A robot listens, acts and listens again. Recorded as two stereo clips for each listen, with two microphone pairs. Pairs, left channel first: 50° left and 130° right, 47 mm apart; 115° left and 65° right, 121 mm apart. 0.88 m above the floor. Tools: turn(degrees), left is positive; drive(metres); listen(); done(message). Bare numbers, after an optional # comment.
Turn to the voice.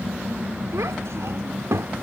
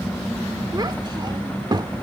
# The child speaking: 120° right.
turn(-120)
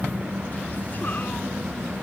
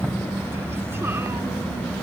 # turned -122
listen()
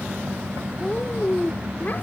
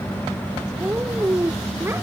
done("Found it: a child speaking, straight ahead.")